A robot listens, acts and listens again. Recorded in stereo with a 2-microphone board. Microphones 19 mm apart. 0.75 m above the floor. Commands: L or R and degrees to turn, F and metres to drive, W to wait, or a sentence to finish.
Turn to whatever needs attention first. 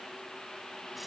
W
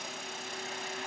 W
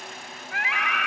L20
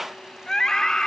L140
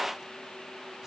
W
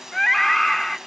L10
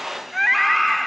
Found it: a scream, straight ahead.